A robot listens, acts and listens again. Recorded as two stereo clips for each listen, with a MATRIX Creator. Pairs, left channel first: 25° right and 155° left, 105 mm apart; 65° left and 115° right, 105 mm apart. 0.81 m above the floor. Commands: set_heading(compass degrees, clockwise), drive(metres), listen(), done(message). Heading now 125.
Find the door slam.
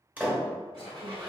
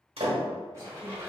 set_heading(255)
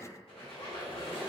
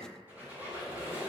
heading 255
done("I heard a door slam from this way, but can't make it out now.")